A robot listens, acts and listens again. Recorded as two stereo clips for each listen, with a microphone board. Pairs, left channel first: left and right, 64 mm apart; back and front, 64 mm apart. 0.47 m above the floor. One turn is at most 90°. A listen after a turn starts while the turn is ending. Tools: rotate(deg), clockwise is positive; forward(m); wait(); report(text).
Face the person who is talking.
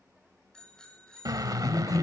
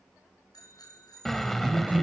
rotate(-65)
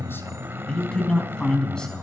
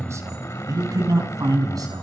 rotate(-15)
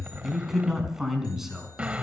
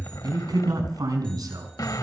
report("Found it: a man speaking, straight ahead, over 4 m away.")